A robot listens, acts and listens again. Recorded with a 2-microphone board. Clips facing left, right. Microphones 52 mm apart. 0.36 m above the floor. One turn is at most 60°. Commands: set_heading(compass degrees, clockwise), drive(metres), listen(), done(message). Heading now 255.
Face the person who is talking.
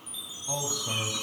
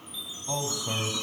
set_heading(285)
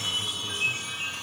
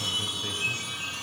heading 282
listen()
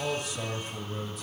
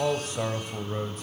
set_heading(342)
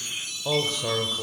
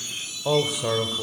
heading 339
done("Facing the man speaking.")